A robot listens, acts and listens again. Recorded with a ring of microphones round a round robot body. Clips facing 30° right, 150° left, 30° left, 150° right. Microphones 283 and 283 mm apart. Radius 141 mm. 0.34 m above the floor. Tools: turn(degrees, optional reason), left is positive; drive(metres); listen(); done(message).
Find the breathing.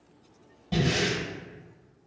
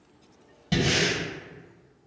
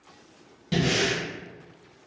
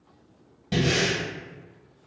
turn(degrees=110, reason="The breathing: 110° left.")
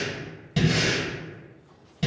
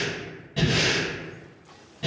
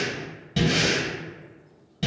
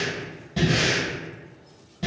turn(degrees=-30, reason="The breathing is now 30° right.")
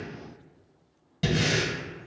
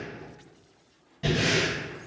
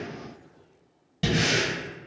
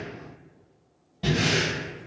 turn(degrees=-10, reason="The breathing is now 10° right.")
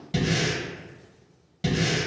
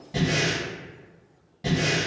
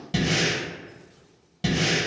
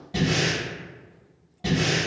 done("Facing the breathing, 1 to 2 m away.")